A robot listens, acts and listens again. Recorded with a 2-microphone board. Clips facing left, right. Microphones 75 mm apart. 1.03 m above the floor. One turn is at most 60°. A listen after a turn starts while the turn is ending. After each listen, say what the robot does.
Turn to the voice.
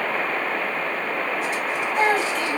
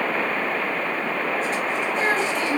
Turn 45° left.
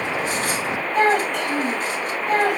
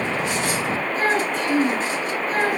Turn 60° left.
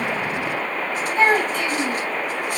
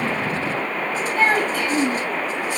Turn 20° left.
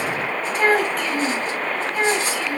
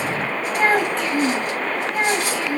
Facing the child speaking, over 4 m away.